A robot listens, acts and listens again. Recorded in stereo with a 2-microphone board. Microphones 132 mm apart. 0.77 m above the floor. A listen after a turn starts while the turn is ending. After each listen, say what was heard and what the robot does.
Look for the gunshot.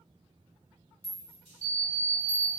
Keep listening.
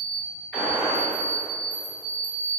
Turn 30° left.
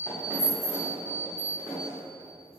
Keep listening.
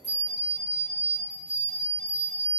I heard a gunshot, but can't make it out now. It was about 20° right or 140° left.